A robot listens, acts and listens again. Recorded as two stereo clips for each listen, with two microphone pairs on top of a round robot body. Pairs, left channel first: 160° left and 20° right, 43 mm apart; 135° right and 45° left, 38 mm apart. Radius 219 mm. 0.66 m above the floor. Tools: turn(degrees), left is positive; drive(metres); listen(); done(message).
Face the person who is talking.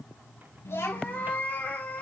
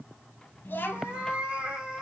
turn(degrees=-170)
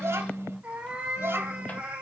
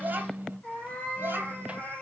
turn(degrees=10)
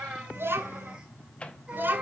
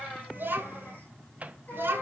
turn(degrees=25)
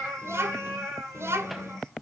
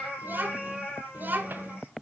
done("Found it: a child speaking, straight ahead.")